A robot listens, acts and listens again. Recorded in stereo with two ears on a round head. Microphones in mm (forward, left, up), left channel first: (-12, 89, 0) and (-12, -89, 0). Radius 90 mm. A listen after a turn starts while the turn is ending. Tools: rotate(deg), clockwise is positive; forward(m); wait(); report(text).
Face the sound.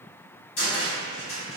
rotate(-70)
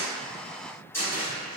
rotate(-10)
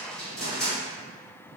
report("Facing the cupboard door, 1 to 2 m away.")